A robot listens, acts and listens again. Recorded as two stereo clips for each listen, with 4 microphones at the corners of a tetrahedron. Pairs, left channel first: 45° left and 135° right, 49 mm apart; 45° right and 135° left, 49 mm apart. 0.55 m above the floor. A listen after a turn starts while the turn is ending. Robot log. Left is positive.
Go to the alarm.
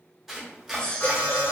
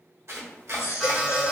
note: The alarm: 50° left.
cmd yaw +50
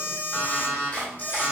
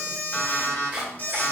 cmd fwd 1.0
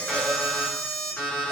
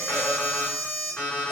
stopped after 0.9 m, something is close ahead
end: I am next to the alarm.